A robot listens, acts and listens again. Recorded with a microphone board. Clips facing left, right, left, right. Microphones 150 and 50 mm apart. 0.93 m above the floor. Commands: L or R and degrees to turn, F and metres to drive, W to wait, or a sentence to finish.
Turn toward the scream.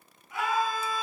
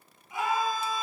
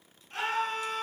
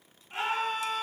R30
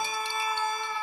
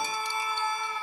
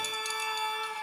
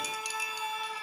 L20
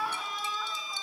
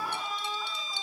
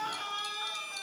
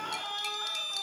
Found it: a scream, straight ahead, over 4 m away.